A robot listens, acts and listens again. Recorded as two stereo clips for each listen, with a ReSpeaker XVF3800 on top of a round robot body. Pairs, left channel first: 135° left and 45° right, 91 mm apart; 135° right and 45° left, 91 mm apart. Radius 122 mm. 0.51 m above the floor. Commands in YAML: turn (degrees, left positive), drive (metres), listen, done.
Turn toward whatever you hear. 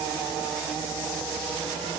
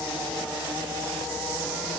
listen: true
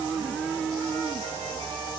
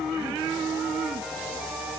listen: true
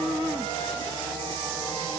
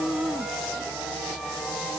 done: "I can't make out anything."